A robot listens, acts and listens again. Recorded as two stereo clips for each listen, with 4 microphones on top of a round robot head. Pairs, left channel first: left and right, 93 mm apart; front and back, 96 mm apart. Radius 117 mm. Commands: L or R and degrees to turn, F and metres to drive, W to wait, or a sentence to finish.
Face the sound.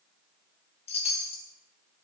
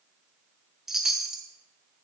L95
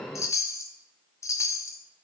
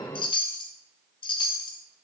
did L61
L35
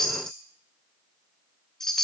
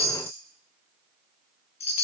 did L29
Facing the chime, under 1 m away.